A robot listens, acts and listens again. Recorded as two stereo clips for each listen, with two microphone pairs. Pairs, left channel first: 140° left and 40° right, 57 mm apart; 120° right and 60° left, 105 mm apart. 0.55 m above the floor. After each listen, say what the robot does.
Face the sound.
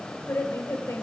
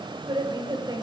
Turn 110° left.
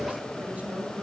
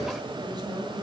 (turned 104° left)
Turn 20° left.
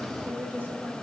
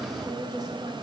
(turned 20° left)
Turn 10° left.
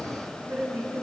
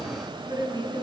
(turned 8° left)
Turn 10° left.
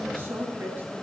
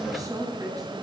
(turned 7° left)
Turn 10° left.
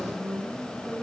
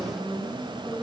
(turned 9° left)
Facing the woman speaking, 2 to 4 m away.